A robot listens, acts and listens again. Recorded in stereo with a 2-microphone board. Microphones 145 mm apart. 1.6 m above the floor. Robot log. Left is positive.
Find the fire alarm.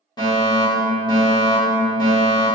note: The fire alarm: about 30° left or 150° left.
cmd yaw +30
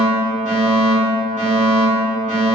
note: So it is at 115° left.
cmd yaw +115
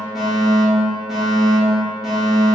end: Facing the fire alarm.